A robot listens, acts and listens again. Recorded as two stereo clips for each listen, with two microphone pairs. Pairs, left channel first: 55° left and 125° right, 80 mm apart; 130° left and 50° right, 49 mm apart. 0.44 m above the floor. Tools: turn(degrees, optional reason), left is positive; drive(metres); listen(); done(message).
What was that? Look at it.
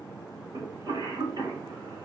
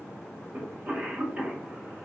turn(degrees=-105, reason="The cough: 105° right.")
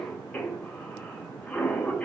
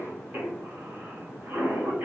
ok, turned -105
turn(degrees=-15, reason="The cough is now 15° right.")
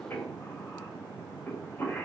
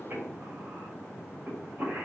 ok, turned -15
done("Facing the cough.")